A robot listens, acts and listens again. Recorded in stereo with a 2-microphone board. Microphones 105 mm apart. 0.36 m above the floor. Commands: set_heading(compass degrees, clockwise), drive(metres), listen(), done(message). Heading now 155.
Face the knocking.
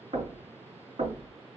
set_heading(225)
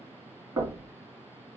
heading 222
set_heading(257)
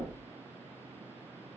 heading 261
done("Facing the knocking, 2 to 4 m away.")